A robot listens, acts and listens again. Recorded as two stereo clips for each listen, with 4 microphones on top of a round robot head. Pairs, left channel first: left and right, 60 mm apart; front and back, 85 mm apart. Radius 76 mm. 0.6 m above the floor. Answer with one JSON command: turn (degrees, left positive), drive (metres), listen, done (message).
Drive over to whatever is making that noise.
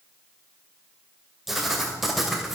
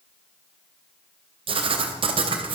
{"turn": 180}
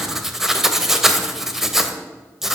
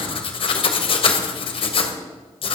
{"drive": 1.0}
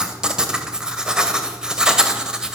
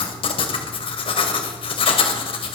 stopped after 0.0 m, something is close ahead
{"turn": -15}
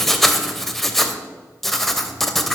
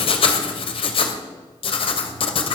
{"done": "Something is in my way. I am facing the writing but have not reached it."}